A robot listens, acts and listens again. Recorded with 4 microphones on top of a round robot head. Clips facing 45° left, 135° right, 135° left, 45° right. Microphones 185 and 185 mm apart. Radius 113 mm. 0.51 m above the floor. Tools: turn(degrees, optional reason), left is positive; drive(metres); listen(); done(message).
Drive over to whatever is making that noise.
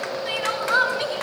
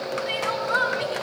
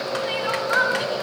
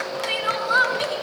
drive(metres=1.0)
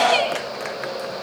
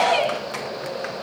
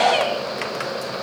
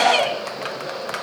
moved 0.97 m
drive(metres=1.0)
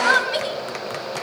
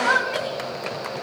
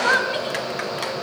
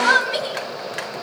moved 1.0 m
drive(metres=1.0)
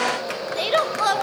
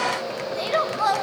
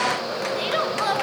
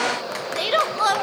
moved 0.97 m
turn(degrees=-10, reason="The crying is now 10° right.")
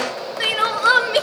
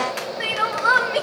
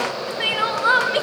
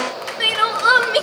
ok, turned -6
drive(metres=1.0)
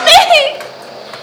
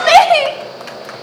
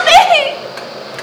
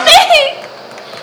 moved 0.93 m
drive(metres=1.0)
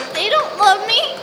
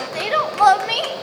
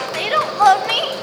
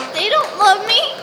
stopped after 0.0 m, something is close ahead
done("Arrived at the crying, straight ahead.")